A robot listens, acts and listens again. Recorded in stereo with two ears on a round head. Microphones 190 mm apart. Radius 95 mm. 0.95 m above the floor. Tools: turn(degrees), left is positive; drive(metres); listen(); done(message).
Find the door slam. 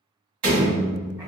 turn(degrees=-90)
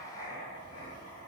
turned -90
done("I heard a door slam from this way, but can't make it out now.")